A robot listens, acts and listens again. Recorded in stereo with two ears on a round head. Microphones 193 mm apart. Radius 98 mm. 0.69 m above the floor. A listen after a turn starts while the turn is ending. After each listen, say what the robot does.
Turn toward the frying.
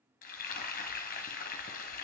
Turn 40° left.
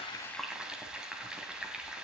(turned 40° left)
Found it: frying, straight ahead.